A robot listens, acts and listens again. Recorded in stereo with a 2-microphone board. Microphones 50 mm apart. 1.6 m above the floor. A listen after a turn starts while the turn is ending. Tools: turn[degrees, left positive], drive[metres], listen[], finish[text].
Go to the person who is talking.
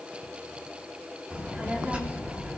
Thought: The child speaking: about 25° right or 155° right.
Action: turn[-25]
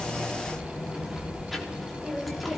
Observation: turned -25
Action: drive[1.0]
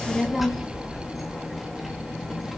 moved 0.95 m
Action: drive[1.0]
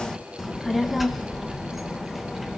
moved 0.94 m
Action: drive[1.0]
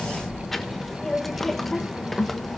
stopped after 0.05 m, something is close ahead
Action: finish[Arrived at the child speaking, straight ahead.]